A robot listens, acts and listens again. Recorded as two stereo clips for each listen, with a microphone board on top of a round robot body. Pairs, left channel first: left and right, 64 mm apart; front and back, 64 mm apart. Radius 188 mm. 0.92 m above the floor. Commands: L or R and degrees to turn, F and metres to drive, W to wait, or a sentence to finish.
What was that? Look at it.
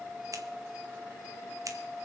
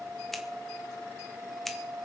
R85
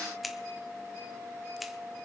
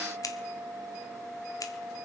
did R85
Facing the scissors.